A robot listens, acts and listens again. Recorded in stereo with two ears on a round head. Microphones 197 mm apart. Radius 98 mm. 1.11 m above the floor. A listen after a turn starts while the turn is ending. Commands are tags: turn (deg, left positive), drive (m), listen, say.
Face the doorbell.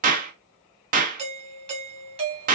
<turn deg="-25"/>
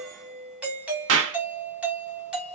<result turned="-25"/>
<say>Found it: a doorbell, straight ahead, under 1 m away.</say>